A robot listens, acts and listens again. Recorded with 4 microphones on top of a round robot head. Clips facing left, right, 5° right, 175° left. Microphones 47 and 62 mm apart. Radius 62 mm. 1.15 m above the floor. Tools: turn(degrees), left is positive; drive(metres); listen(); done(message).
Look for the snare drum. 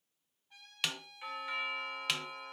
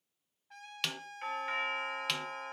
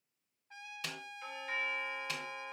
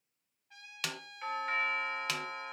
turn(degrees=175)
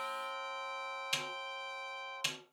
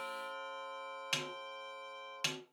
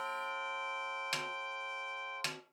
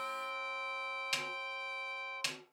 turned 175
turn(degrees=-50)
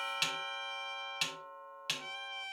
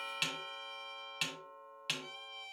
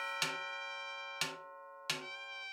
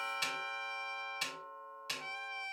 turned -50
done("Facing the snare drum.")